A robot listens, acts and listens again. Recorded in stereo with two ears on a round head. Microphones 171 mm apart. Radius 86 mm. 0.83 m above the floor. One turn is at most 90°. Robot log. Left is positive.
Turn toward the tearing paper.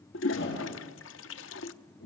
cmd idle
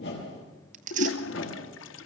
note: The tearing paper: about 40° right or 140° right.
cmd yaw -40
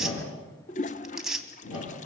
end: Found it: tearing paper, straight ahead, 2 to 4 m away.